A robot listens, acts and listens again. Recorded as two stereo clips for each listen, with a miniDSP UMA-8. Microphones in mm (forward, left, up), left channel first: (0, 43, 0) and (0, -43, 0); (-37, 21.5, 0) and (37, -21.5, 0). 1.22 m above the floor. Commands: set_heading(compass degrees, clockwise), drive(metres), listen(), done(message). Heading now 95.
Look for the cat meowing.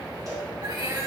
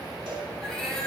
set_heading(225)
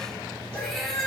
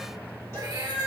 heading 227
done("Found it: a cat meowing, straight ahead, 1 to 2 m away.")